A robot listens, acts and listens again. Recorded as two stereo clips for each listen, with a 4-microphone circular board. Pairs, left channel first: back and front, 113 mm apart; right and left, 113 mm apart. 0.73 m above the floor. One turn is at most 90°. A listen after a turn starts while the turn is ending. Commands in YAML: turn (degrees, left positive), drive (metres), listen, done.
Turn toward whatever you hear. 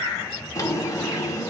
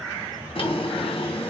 turn: -90
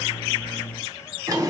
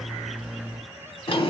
turn: -60
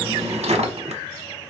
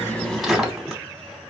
done: "Found it: a drawer, straight ahead, 1 to 2 m away."